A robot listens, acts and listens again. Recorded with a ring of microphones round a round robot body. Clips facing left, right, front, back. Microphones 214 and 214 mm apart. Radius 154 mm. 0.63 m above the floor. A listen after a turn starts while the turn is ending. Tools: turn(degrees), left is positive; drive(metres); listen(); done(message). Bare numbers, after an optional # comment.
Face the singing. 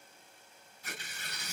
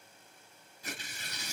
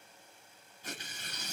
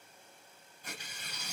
listen()
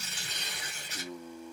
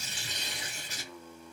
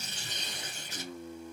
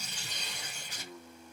# The singing: 10° left.
turn(10)
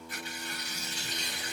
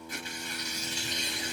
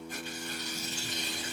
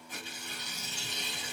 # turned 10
listen()
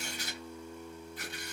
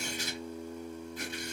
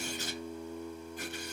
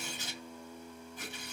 # The singing is now 55° right.
turn(-55)
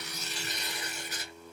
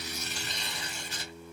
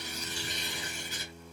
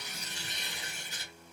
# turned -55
done("Found it: singing, straight ahead.")